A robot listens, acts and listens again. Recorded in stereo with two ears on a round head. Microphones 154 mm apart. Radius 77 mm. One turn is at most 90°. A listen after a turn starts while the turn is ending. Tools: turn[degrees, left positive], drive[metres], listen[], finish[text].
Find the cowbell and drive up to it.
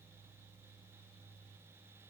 Action: listen[]
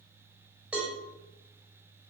Action: turn[-30]
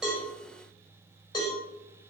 Thought: So it is at 25° left.
Action: turn[25]
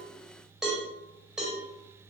Action: drive[1.0]
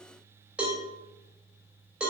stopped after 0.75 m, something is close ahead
Action: finish[Blocked. The cowbell is further on, straight ahead.]